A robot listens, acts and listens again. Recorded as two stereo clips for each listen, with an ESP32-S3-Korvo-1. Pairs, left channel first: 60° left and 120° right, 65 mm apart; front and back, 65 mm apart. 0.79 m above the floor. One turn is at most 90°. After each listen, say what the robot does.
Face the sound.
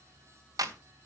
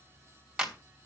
Turn 90° right.
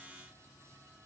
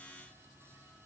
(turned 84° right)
Turn 15° right.
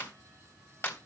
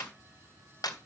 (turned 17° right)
Facing the clap.